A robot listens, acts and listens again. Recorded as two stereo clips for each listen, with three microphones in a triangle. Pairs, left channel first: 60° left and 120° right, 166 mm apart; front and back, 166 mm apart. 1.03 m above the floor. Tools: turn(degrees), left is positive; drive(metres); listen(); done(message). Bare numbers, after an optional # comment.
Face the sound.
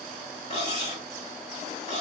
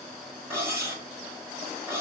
# The cutlery clinking: 105° left.
turn(105)
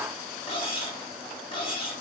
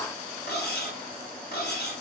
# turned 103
done("Facing the cutlery clinking.")